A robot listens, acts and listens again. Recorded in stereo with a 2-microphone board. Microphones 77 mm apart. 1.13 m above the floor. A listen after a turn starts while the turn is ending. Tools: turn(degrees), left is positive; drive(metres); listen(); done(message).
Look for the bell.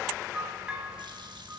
turn(degrees=-15)
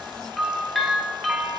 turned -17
done("Found it: a bell, straight ahead, 2 to 4 m away.")